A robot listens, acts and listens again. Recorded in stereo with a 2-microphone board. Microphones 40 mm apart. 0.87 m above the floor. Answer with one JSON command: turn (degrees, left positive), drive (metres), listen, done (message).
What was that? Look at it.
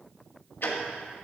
{"turn": 55}
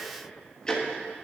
{"turn": 20}
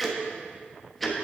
{"done": "Found it: ticking, straight ahead."}